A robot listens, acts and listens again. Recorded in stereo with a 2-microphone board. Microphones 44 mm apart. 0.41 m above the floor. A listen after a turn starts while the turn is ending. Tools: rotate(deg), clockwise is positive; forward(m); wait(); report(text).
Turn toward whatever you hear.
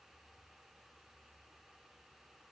wait()
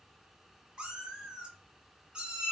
rotate(25)
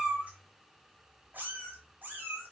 rotate(130)
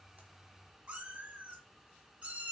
rotate(25)
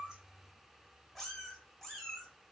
rotate(-10)
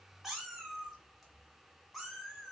report("Found it: a cat meowing, straight ahead.")